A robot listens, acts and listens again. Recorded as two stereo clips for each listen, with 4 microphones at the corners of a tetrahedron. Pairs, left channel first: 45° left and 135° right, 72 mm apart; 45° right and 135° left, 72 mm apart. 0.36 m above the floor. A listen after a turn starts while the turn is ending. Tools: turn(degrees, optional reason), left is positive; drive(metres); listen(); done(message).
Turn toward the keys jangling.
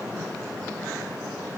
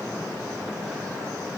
listen()
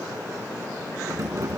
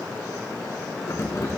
turn(degrees=-90, reason="The keys jangling: 90° right.")
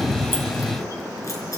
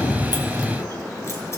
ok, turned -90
done("Facing the keys jangling.")